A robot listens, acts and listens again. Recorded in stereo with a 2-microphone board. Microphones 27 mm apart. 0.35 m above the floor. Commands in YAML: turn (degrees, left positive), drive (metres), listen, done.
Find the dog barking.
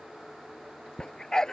turn: 20
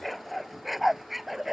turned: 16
turn: -10
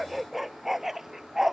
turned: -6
turn: -15
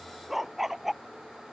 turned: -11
turn: -10
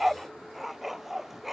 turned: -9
done: "Found it: a dog barking, straight ahead."